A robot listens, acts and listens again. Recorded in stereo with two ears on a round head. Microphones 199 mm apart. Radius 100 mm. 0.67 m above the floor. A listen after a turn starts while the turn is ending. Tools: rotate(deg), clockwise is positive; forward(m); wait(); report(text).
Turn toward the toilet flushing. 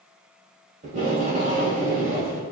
wait()
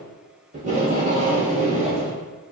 wait()
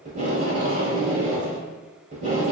report("I can't make out a toilet flushing to turn to.")